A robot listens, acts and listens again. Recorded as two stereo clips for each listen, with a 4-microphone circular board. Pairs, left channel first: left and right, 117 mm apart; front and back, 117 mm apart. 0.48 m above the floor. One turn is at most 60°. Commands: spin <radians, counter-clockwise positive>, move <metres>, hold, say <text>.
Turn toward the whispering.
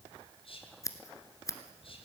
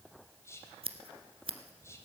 spin 1.05
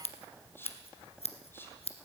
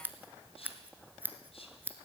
spin 0.35
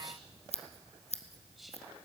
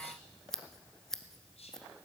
say Found it: whispering, straight ahead.